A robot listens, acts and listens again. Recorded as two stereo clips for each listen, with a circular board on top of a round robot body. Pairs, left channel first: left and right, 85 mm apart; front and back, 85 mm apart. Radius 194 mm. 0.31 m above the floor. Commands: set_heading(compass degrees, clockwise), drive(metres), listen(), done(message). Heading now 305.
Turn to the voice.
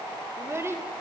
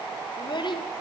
set_heading(335)
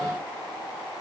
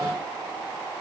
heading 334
listen()
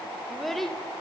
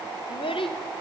done("Found it: a child speaking, straight ahead, 1 to 2 m away.")